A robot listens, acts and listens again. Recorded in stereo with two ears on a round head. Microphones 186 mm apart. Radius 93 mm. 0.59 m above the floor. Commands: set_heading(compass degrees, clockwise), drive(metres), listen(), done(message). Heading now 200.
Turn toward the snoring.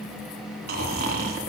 set_heading(250)
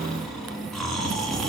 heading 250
done("Found it: snoring, straight ahead.")